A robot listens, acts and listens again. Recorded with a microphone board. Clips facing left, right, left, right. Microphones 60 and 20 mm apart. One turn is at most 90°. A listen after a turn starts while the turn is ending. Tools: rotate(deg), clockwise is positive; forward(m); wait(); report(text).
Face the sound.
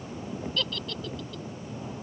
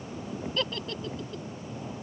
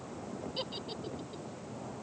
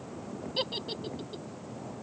rotate(25)
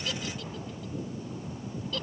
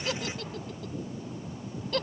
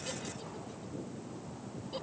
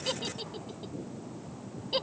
rotate(90)
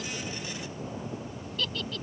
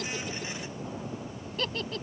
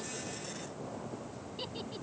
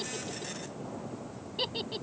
rotate(35)
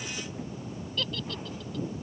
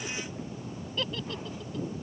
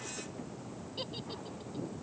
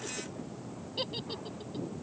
rotate(20)
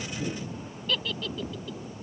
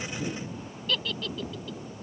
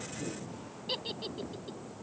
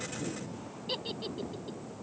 report("Found it: a giggle, straight ahead.")